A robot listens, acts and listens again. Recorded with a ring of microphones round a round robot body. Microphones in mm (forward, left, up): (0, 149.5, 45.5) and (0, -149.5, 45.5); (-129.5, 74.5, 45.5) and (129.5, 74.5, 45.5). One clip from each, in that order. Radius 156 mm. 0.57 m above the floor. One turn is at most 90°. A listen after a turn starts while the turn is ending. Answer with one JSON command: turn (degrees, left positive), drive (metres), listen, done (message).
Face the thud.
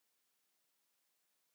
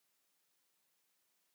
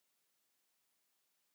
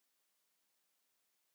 {"listen": true}
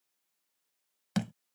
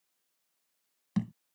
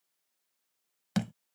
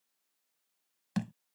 {"turn": 90}
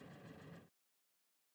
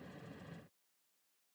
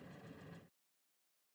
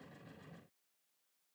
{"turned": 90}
{"turn": 35}
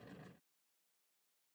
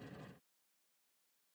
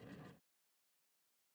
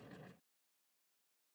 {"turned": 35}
{"done": "I heard a thud from this way, but can't make it out now."}